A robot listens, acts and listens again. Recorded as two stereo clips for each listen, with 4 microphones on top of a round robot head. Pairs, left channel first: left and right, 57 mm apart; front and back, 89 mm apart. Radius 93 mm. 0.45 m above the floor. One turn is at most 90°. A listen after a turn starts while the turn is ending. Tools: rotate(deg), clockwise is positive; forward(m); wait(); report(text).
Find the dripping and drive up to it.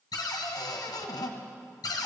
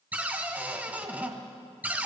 wait()
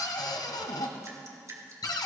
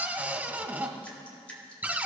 rotate(75)
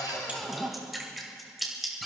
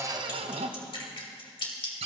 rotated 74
forward(1.0)
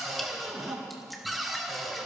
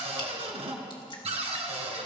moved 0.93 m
wait()
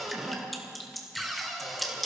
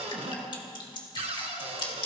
forward(1.0)
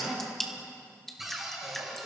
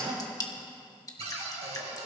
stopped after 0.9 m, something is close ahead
report("Arrived at the dripping, straight ahead.")